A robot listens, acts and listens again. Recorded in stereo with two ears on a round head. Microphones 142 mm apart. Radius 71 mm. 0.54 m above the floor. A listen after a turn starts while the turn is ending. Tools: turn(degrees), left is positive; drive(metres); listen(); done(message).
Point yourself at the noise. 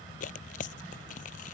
turn(degrees=55)
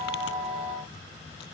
listen()
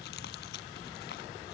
listen()
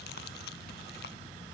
done("I heard tearing paper, but can't make it out now. It was about straight ahead or 70° left.")